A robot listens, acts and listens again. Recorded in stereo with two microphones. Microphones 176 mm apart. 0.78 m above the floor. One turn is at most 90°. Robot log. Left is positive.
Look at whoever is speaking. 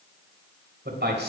cmd yaw -90
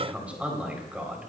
note: So it is at 10° right.
cmd yaw -10
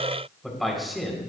end: Facing the man speaking, over 4 m away.